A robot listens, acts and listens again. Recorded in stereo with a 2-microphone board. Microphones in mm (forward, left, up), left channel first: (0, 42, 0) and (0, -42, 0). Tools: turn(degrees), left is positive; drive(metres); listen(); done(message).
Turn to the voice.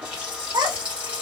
turn(degrees=-55)
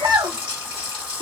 turn(degrees=-65)
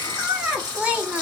turn(degrees=-15)
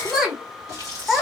done("Found it: a child speaking, straight ahead, under 1 m away.")